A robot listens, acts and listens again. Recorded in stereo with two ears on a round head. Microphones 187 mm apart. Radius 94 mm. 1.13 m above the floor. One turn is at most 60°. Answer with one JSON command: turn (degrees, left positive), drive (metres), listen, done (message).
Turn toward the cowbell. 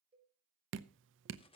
{"turn": -30}
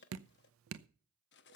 {"listen": true}
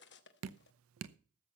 {"listen": true}
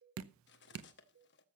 {"turn": -60}
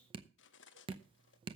{"turn": -60}
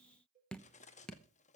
{"turn": -35}
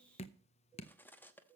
{"turn": -10}
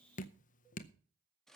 {"listen": true}
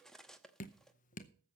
{"listen": true}
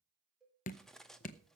{"done": "Facing the cowbell."}